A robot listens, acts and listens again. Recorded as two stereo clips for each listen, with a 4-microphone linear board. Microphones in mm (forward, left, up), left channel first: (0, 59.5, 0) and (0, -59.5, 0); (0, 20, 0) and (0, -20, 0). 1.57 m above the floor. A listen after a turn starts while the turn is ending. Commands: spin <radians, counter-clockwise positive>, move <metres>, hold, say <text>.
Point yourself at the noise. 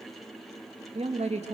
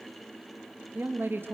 spin -1.22
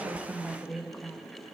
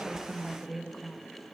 say Found it: a woman speaking, straight ahead.